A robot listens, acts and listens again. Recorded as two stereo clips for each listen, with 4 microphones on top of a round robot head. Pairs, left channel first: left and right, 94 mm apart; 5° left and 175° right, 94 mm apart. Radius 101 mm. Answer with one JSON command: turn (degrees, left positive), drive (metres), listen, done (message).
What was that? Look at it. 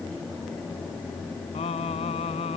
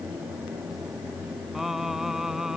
{"turn": 100}
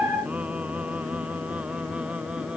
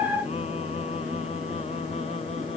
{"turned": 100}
{"listen": true}
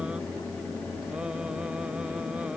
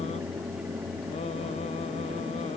{"listen": true}
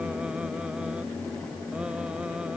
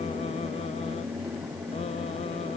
{"done": "Facing where the singing came from. I can't hear it now."}